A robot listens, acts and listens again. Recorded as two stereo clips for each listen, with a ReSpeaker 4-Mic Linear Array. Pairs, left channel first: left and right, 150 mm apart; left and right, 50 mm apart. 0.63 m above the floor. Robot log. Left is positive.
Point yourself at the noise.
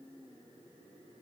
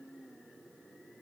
cmd idle
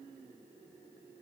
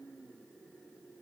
cmd idle
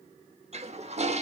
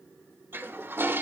note: The toilet flushing: about 45° right or 135° right.
cmd yaw -45
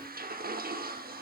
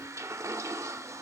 note: So it is at 85° right.
cmd yaw -85
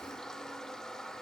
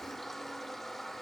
end: Found it: a toilet flushing, straight ahead.